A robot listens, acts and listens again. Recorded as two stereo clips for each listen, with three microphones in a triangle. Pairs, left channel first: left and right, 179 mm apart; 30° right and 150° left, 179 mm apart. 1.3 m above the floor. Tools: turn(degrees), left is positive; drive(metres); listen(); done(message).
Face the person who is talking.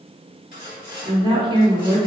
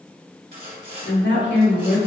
turn(degrees=-25)
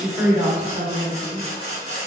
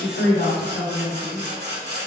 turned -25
turn(degrees=-10)
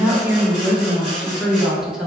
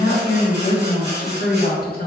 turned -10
done("Facing the woman speaking.")